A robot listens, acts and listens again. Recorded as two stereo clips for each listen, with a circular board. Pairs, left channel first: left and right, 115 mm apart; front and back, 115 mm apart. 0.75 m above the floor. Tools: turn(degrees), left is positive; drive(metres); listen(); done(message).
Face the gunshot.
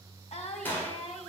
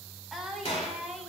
turn(degrees=20)
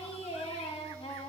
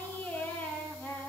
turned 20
done("Facing where the gunshot came from. I can't hear it now.")